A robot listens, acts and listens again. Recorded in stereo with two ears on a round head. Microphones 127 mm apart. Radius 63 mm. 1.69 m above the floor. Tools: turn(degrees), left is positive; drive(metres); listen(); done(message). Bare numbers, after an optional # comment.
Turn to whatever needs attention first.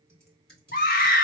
# The scream: about 65° left or 115° left.
turn(65)
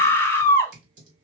# So it is at 20° left.
turn(20)
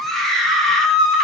done("Found it: a scream, straight ahead, under 1 m away.")